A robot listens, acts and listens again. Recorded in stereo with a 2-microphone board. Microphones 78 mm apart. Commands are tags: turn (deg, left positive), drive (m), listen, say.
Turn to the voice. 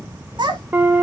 <turn deg="-65"/>
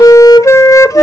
<listen/>
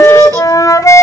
<listen/>
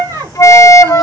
<turn deg="-45"/>
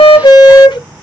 <listen/>
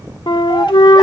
<say>Found it: a child speaking, straight ahead, 2 to 4 m away.</say>